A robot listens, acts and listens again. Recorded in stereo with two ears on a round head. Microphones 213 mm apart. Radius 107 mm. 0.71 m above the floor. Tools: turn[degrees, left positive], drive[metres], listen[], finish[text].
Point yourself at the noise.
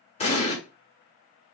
Thought: The explosion: about 25° left or 155° left.
Action: turn[25]
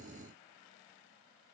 Action: listen[]
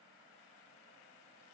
Action: finish[I heard an explosion, but can't make it out now. It was about straight ahead or 130° left.]